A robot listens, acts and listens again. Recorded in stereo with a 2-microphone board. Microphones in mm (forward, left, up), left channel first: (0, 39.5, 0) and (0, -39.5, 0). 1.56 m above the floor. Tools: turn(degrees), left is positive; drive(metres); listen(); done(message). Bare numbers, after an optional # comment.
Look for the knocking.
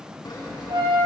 listen()
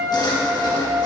listen()
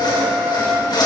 done("I can't make out knocking to turn to.")